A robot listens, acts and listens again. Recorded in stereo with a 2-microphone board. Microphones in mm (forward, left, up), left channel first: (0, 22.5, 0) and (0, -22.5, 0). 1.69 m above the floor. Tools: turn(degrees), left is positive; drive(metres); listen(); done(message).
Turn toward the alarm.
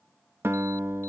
listen()
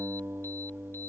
listen()
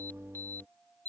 turn(degrees=50)
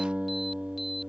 listen()
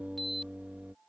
done("Facing the alarm.")